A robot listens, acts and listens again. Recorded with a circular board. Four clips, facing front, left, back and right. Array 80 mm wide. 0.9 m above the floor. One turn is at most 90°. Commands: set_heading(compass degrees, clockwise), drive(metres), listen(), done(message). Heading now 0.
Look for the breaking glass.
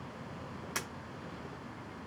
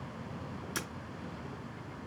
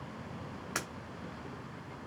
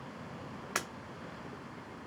set_heading(90)
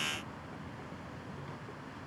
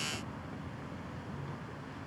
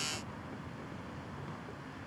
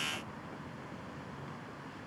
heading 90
set_heading(110)
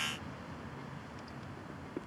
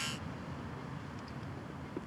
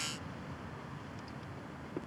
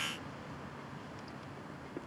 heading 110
done("I heard breaking glass from this way, but can't make it out now.")